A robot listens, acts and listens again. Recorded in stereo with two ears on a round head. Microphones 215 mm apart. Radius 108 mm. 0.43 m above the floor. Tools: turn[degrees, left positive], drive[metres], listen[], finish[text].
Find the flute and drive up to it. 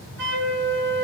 Thought: The flute: about 50° right or 130° right.
Action: turn[-50]
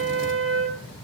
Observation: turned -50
Thought: So it is at 60° right.
Action: turn[-60]
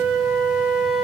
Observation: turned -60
Action: drive[1.0]
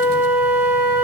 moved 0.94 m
Thought: The flute is now 10° right.
Action: turn[-10]
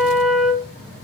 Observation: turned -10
Action: drive[1.0]
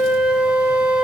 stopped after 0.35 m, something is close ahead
Thought: The flute is now 10° right.
Action: turn[-10]
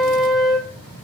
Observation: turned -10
Action: finish[Arrived at the flute, straight ahead.]